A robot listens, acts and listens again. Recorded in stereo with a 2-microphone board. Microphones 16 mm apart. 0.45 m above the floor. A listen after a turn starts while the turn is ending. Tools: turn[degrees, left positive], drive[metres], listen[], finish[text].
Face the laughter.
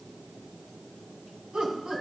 Action: turn[-90]
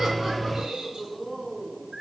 Action: finish[Facing the laughter, 2 to 4 m away.]